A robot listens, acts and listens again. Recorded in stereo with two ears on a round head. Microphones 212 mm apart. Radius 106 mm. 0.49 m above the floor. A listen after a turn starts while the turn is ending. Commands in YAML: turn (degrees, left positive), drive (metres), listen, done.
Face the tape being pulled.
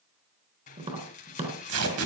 turn: -70
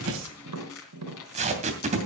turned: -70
turn: -30
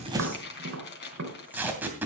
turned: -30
turn: -10
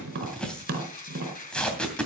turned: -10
done: "Facing the tape being pulled, 2 to 4 m away."